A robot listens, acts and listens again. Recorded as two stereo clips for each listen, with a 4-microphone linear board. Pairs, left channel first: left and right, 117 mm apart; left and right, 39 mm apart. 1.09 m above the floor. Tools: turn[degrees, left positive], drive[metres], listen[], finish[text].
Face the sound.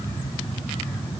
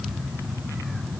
Action: listen[]
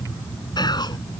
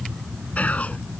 Thought: The whispering: about 40° left or 140° left.
Action: turn[40]
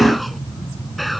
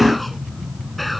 Action: listen[]
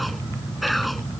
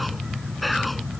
Action: finish[Found it: whispering, straight ahead.]